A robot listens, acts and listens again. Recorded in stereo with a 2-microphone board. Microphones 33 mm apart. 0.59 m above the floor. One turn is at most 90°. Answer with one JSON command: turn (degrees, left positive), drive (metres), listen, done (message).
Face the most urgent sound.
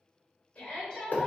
{"turn": 40}
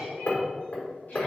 {"listen": true}
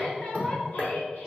{"turn": 90}
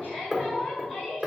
{"turn": 30}
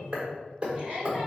{"done": "Found it: a shout, straight ahead, 1 to 2 m away."}